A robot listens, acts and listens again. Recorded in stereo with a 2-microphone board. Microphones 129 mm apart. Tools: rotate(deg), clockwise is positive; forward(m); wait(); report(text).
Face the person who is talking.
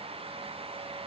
wait()
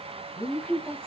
rotate(-30)
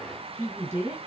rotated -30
rotate(20)
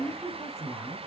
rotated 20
report("Found it: a woman speaking, straight ahead.")